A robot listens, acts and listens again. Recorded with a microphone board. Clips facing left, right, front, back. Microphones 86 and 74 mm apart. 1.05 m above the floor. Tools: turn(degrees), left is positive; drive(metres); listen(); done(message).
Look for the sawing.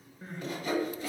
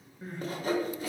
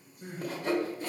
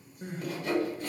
turn(degrees=-50)
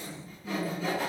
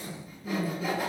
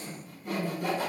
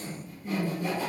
turn(degrees=-10)
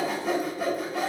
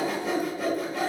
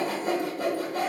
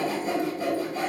done("Facing the sawing.")